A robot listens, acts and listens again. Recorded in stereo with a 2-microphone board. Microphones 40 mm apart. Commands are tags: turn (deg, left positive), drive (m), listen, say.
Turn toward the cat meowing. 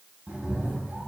<turn deg="-35"/>
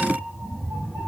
<turn deg="-135"/>
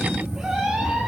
<turn deg="-20"/>
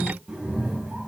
<turn deg="-30"/>
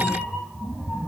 <say>Found it: a cat meowing, straight ahead, 1 to 2 m away.</say>